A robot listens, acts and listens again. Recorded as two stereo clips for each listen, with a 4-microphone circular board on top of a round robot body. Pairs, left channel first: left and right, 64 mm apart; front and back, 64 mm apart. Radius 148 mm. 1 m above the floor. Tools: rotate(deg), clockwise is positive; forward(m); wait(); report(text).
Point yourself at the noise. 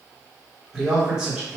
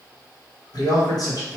rotate(15)
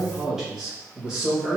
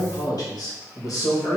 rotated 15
rotate(20)
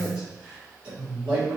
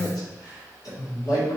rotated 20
rotate(25)
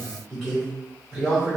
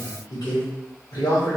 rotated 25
report("Found it: a man speaking, straight ahead.")